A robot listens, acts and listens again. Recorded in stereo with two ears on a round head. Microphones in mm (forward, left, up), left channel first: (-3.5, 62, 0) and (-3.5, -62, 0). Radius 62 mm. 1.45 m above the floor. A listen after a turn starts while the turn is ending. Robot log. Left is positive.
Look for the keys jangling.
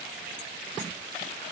cmd idle
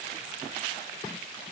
cmd idle
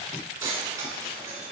note: The keys jangling: about 25° right or 155° right.
cmd yaw -25
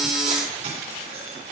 note: So it is at 125° right.
cmd yaw -125
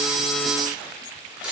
end: Found it: keys jangling, straight ahead, 2 to 4 m away.